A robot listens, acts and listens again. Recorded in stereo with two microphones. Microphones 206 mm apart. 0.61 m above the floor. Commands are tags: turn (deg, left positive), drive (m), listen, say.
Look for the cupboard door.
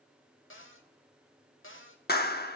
<turn deg="75"/>
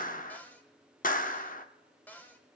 <turn deg="10"/>
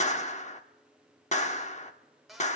<say>Facing the cupboard door.</say>